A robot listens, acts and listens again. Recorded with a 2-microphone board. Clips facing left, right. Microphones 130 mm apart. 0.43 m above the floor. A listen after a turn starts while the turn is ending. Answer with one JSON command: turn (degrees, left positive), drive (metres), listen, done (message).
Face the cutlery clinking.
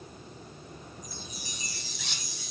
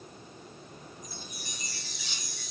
{"turn": 70}
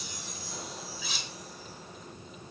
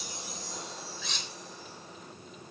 {"done": "Found it: cutlery clinking, straight ahead."}